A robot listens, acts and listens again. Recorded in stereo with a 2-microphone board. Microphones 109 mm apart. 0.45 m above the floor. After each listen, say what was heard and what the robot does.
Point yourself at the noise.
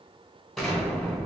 Turn 30° left.
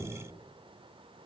Keep listening.
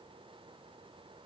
I heard an explosion, but can't make it out now. It was about 30° right or 150° left.